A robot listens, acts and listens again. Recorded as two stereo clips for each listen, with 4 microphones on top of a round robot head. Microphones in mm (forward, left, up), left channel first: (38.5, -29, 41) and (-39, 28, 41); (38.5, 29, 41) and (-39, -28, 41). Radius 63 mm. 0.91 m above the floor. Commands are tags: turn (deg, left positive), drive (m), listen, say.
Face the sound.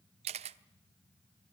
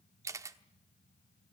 <turn deg="155"/>
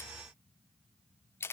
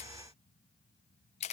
<turn deg="30"/>
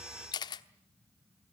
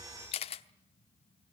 <turn deg="10"/>
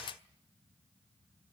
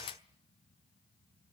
<say>Facing the camera shutter, 1 to 2 m away.</say>